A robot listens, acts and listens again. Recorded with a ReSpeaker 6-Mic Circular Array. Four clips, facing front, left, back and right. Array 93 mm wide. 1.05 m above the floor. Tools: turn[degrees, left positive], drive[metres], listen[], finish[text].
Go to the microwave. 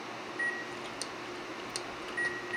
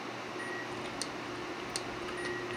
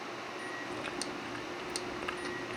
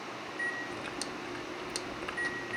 Thought: The microwave: 30° right.
Action: turn[-30]
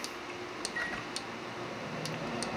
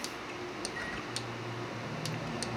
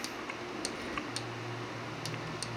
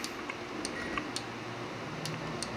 Action: drive[1.0]
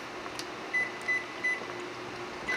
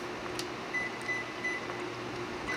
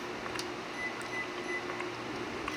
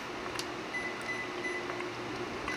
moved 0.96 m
Action: drive[1.0]
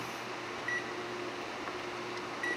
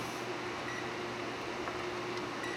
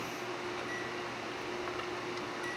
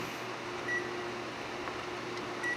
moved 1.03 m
Action: drive[1.0]
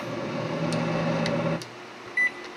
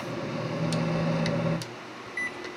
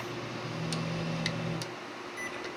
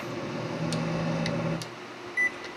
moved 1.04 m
Action: drive[1.0]
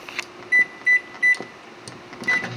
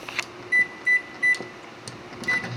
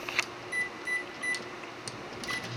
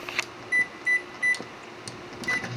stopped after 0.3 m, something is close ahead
Action: finish[I am next to the microwave.]